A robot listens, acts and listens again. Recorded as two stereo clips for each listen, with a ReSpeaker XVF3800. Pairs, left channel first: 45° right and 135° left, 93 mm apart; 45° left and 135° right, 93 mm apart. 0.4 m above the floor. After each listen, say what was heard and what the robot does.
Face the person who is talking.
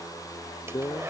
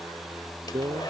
The man speaking: 100° right. Turn 100° right.
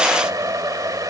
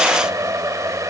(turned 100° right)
Keep listening.
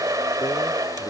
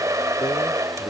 Keep listening.
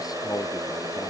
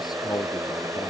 Found it: a man speaking, straight ahead.